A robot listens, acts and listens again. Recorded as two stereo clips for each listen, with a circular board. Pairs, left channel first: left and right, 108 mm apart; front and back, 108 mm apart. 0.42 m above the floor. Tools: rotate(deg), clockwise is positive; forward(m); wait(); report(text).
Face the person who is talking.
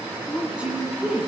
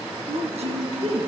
rotate(170)
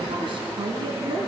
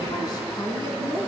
rotate(50)
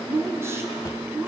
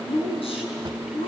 rotate(25)
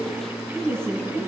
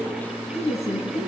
report("Found it: a woman speaking, straight ahead.")